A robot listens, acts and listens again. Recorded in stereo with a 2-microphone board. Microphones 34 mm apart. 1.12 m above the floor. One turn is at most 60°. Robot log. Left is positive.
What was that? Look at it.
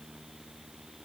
cmd idle
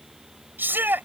note: The shout: about 75° right or 105° right.
cmd yaw -60
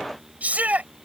note: So it is at 45° right.
cmd yaw -45
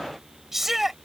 end: Facing the shout.